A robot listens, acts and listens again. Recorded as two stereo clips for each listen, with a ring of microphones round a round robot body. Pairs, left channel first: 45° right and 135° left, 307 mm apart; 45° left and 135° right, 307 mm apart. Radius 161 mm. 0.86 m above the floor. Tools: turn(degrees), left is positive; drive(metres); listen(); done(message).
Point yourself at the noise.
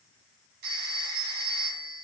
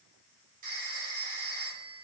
turn(degrees=160)
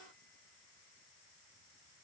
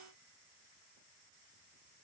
listen()
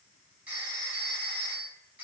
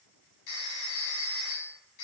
turn(degrees=50)
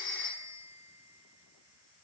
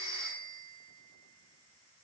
done("Found it: a phone ringing, straight ahead.")